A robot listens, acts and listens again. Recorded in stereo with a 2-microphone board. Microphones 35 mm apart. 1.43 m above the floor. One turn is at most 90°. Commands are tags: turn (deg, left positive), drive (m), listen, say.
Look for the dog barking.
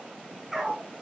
<turn deg="-30"/>
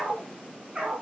<turn deg="-90"/>
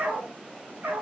<turn deg="-70"/>
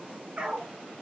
<turn deg="-40"/>
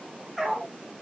<say>Found it: a dog barking, straight ahead.</say>